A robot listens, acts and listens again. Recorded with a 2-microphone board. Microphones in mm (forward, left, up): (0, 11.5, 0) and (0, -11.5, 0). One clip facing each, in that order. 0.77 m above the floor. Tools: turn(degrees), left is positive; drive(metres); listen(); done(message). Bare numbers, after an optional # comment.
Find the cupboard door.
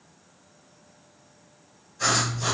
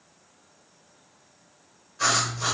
listen()
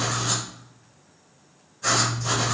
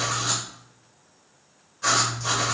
listen()
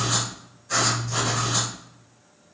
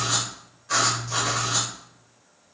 done("I can't make out a cupboard door to turn to.")